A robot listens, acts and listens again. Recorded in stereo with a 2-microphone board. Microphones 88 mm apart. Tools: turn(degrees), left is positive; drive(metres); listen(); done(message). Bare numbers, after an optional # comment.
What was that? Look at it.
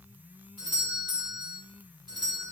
# The doorbell: about 60° right or 120° right.
turn(-60)
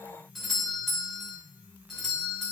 done("Facing the doorbell, 2 to 4 m away.")